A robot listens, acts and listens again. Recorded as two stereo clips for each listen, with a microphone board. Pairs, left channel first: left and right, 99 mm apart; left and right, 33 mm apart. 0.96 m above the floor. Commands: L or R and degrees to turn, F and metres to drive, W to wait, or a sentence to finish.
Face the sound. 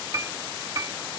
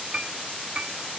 R35
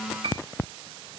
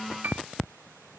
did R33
R110
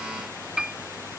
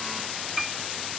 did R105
Found it: a piano, straight ahead.